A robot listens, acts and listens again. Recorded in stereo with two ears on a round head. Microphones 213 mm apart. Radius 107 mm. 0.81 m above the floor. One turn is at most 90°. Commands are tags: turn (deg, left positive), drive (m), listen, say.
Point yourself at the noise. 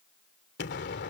<turn deg="45"/>
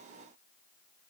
<listen/>
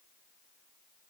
<say>I heard an explosion, but can't make it out now. It was about straight ahead or 90° left.</say>